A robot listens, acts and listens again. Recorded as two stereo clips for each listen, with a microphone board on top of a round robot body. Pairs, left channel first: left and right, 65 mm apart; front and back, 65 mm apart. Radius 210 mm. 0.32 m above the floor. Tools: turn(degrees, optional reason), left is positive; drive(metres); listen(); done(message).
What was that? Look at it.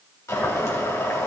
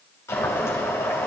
turn(degrees=50, reason="The boiling: 50° left.")
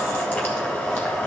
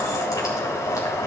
turn(degrees=25, reason="The boiling is now 25° left.")
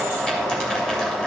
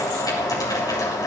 turn(degrees=10, reason="The boiling is now 10° left.")
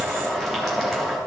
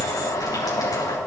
done("Facing the boiling, 2 to 4 m away.")